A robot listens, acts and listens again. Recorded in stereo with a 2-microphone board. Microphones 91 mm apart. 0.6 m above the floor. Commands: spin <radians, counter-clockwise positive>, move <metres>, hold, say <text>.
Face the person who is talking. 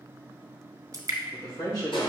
spin 0.70
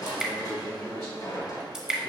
say Facing the man speaking.